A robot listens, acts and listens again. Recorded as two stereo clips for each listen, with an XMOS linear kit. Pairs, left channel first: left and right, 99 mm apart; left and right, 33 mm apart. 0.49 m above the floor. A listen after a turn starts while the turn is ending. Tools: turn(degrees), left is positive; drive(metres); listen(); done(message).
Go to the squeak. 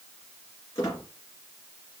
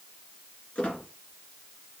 turn(degrees=40)
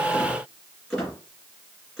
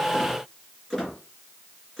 drive(metres=1.0)
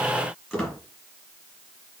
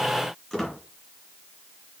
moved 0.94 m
drive(metres=1.0)
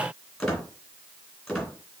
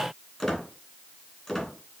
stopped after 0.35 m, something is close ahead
done("I am next to the squeak.")